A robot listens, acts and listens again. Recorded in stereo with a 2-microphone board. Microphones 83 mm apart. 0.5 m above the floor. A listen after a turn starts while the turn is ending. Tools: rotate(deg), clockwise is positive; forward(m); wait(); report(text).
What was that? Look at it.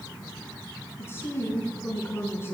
rotate(-30)
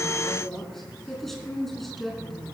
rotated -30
report("Found it: a woman speaking, straight ahead.")